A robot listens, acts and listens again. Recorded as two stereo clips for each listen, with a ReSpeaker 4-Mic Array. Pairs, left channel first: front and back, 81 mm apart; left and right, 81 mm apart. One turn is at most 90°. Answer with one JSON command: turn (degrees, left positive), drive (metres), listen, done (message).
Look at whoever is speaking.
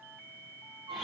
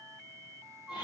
{"listen": true}
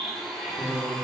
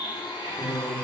{"turn": -90}
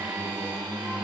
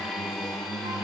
{"turn": -40}
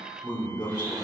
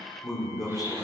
{"done": "Facing the man speaking, 2 to 4 m away."}